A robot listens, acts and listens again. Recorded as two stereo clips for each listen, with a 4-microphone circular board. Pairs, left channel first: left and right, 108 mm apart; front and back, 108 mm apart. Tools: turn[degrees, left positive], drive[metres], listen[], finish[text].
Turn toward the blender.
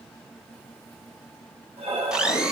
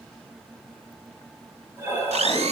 Thought: The blender: 170° right.
Action: turn[-170]
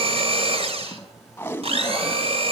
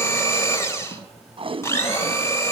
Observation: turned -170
Thought: The blender is now 65° right.
Action: turn[-65]
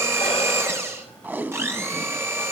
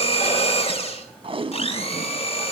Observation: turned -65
Thought: The blender is now 25° right.
Action: turn[-25]
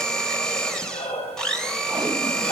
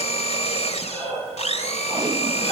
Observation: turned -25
Action: finish[Found it: a blender, straight ahead, 2 to 4 m away.]